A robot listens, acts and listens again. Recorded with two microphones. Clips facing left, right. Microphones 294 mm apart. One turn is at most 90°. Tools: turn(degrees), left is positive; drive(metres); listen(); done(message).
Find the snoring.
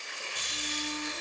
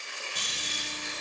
turn(degrees=-90)
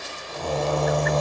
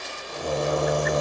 turn(degrees=-15)
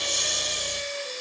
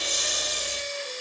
done("Facing the snoring.")